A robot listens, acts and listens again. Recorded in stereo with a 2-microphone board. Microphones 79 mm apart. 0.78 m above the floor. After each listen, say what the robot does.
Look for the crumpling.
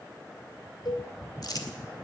Turn 60° left.
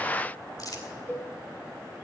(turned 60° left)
Turn 55° left.
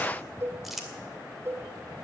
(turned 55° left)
Facing the crumpling.